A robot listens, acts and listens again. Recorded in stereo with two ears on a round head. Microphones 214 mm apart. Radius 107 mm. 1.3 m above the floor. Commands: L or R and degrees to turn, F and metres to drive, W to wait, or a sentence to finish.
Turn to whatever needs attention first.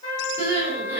R30
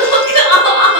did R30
L20
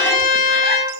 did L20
W
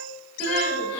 Facing the crying, 1 to 2 m away.